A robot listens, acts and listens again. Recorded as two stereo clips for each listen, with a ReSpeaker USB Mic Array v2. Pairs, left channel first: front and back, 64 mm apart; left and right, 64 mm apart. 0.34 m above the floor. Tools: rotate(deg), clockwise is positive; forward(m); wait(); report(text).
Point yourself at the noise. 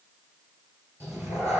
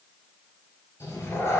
rotate(-135)
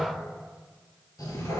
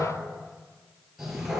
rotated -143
report("Found it: a cat meowing, straight ahead, 1 to 2 m away.")